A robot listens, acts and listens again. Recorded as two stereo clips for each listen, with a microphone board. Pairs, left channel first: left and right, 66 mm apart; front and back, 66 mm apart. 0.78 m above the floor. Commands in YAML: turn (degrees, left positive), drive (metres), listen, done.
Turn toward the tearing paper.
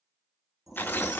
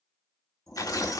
turn: 30
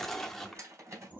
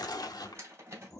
done: "Facing the tearing paper."